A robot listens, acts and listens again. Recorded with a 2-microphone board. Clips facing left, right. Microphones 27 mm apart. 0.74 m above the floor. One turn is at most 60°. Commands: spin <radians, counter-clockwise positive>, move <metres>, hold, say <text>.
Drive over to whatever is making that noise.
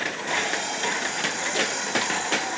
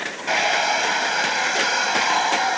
spin -0.79
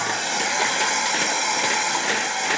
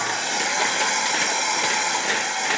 move 1.0
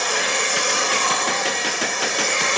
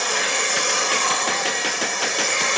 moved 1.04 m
move 1.0
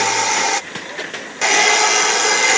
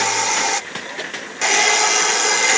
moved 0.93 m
spin 0.17
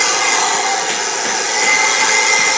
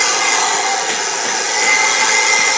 move 1.0
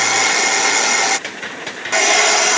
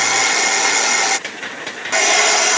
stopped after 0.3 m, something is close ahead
say Arrived at the hair dryer, straight ahead.